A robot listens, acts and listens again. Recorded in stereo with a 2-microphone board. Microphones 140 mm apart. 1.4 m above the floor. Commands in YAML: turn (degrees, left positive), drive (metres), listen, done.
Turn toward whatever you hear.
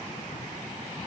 listen: true
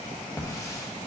turn: 20
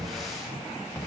done: "Found it: a hiss, straight ahead."